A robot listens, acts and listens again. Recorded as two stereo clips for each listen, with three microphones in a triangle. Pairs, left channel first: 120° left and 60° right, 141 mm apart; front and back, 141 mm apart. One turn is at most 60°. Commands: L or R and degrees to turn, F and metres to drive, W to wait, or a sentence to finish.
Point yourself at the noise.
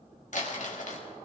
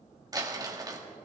L60
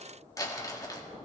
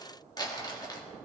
L60
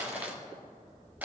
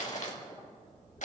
L15
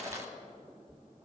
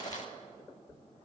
Found it: crumpling, straight ahead.